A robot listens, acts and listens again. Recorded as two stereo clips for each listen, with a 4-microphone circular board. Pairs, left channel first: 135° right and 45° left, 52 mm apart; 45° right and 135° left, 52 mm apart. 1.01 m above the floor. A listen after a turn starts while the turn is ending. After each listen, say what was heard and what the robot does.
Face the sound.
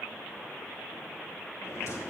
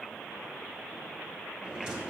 The drawer: 155° right. Turn 155° right.
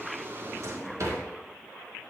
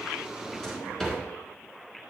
The drawer is now 30° left. Turn 30° left.
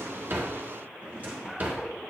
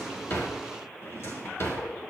The drawer is now 15° right. Turn 15° right.
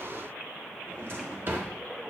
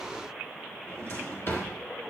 Found it: a drawer, straight ahead.